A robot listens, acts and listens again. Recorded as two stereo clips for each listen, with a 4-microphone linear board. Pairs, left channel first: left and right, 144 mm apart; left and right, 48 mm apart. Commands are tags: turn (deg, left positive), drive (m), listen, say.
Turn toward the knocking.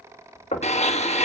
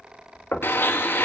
<turn deg="50"/>
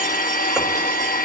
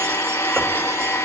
<listen/>
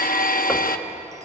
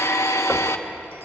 <listen/>
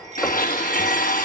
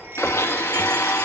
<say>I heard knocking, but can't make it out now. It was about straight ahead or 80° left.</say>